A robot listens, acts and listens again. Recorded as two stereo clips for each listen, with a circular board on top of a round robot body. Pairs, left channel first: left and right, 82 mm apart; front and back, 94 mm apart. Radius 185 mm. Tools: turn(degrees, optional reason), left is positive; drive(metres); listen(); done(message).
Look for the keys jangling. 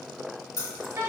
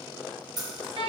turn(degrees=135, reason="The keys jangling: 135° left.")
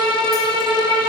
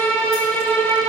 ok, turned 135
listen()
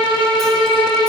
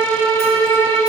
listen()
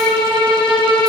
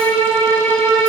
done("I heard keys jangling from this way, but can't make it out now.")